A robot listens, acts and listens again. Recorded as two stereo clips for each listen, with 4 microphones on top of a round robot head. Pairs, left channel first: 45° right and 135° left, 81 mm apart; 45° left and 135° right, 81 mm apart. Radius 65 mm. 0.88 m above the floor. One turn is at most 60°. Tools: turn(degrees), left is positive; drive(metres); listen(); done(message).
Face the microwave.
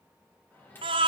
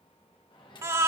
turn(degrees=20)
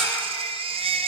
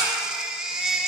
listen()
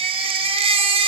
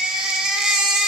listen()
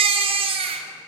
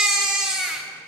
done("I heard a microwave from this way, but can't make it out now.")